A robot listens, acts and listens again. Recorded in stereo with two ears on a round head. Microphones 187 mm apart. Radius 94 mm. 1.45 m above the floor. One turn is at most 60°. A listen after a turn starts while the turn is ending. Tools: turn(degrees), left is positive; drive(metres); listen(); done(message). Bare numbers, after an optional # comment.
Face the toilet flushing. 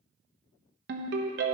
listen()
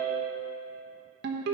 listen()
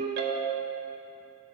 done("I can't make out a toilet flushing to turn to.")